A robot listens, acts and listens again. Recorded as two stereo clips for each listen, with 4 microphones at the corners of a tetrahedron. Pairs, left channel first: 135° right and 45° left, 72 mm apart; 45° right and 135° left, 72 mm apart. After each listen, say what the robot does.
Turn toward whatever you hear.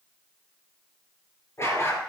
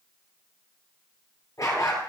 Turn 80° right.
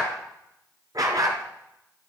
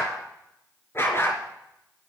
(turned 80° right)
Turn 10° left.
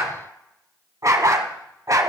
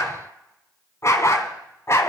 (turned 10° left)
Found it: a dog barking, straight ahead.